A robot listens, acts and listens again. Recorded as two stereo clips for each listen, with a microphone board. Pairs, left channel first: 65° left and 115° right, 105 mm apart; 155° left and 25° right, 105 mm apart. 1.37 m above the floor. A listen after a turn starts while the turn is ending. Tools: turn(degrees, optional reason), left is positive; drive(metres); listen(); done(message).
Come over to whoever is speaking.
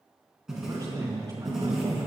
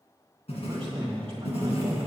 turn(degrees=-60, reason="The man speaking: 60° right.")
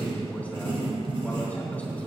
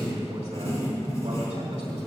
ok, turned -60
drive(metres=1.0)
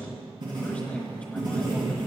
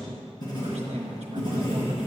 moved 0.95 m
turn(degrees=-10, reason="The man speaking is now 10° right.")
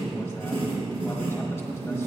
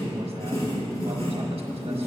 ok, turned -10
listen()
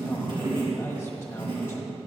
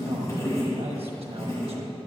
listen()
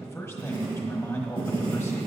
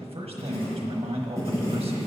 drive(metres=1.0)
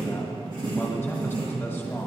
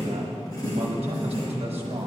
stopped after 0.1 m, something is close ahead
done("I am next to the man speaking.")